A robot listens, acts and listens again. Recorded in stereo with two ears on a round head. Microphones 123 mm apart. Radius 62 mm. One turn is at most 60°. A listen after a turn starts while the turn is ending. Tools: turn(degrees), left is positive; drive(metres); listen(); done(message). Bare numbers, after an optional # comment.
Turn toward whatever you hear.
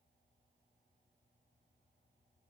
listen()
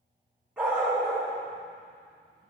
turn(-30)
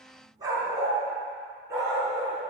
# So it is at 160° right.
turn(-60)
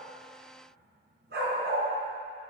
# The dog barking is now 100° right.
turn(-60)
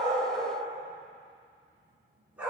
# The dog barking is now 10° right.
turn(-10)
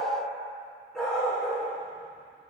done("Facing the dog barking, over 4 m away.")